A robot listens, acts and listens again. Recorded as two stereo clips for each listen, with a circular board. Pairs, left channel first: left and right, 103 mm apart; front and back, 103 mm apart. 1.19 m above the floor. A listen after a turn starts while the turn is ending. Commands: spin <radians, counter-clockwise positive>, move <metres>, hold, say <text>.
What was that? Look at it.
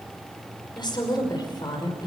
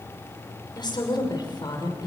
spin 0.79
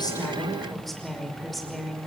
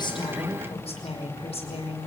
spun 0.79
say Found it: a woman speaking, straight ahead, over 4 m away.